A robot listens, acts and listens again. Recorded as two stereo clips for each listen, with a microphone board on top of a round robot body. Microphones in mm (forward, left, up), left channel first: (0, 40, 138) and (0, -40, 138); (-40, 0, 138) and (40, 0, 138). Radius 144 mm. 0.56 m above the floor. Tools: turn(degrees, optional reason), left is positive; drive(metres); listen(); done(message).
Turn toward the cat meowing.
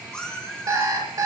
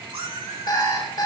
turn(degrees=15, reason="The cat meowing: 15° left.")
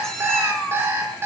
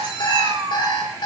turn(degrees=10, reason="The cat meowing is now 10° left.")
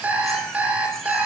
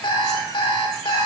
listen()
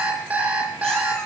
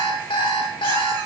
listen()
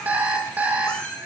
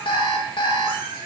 turn(degrees=15, reason="The cat meowing is now 15° left.")
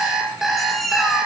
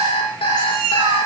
done("Found it: a cat meowing, straight ahead.")